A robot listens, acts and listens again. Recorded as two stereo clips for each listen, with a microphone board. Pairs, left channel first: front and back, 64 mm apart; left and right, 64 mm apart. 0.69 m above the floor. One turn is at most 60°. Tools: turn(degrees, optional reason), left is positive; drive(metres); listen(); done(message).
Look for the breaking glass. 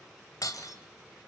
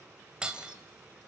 turn(degrees=-15, reason="The breaking glass: 15° right.")
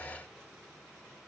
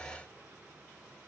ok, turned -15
done("I heard breaking glass from this way, but can't make it out now.")